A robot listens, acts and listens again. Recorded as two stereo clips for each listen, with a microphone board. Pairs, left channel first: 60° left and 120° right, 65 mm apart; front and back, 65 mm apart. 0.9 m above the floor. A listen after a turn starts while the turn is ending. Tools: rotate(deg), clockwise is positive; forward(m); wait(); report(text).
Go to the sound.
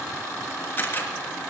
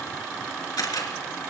forward(1.0)
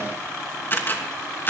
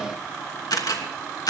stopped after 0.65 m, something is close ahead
report("Blocked. The camera shutter is further on, straight ahead.")